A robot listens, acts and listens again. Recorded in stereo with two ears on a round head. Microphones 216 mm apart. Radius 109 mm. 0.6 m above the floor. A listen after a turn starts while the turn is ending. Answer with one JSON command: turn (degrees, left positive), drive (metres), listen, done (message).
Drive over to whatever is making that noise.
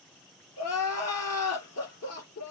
{"turn": 75}
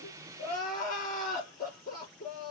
{"turn": 35}
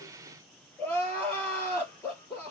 {"turn": 10}
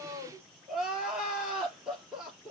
{"drive": 1.0}
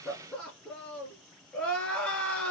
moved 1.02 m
{"drive": 1.0}
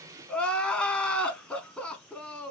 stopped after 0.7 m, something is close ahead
{"done": "Arrived at the crying, straight ahead."}